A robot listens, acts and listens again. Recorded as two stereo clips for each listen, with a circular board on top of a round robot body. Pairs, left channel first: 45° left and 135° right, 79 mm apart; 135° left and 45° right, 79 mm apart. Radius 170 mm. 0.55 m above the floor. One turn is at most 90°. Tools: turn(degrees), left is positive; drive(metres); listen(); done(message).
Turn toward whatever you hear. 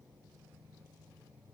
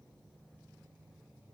listen()
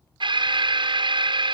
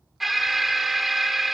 turn(degrees=-90)
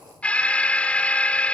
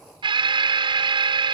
turn(degrees=-30)
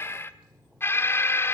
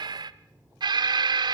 turn(degrees=-15)
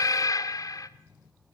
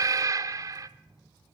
done("Found it: an alarm, straight ahead, under 1 m away.")